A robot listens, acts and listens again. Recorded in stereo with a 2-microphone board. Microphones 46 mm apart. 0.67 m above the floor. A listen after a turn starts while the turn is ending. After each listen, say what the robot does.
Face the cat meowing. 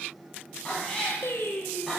Turn 30° left.
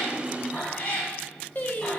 Turn 155° left.
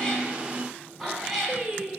Turn 10° right.
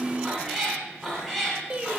Found it: a cat meowing, straight ahead, 2 to 4 m away.